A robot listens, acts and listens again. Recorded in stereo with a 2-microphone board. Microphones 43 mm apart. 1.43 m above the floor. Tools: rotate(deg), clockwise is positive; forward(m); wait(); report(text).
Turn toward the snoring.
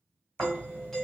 rotate(30)
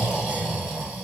rotate(10)
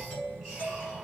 wait()
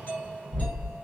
report("Facing the snoring, 1 to 2 m away.")